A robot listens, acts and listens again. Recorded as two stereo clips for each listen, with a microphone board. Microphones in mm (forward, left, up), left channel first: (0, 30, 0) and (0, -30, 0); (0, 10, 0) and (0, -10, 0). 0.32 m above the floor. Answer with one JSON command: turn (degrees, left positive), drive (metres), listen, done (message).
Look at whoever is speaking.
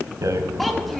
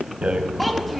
{"turn": 30}
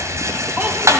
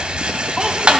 {"listen": true}
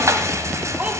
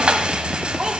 {"turn": -30}
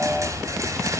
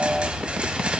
{"listen": true}
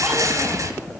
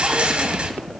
{"listen": true}
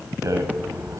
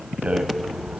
{"done": "Facing where the child speaking came from. I can't hear it now."}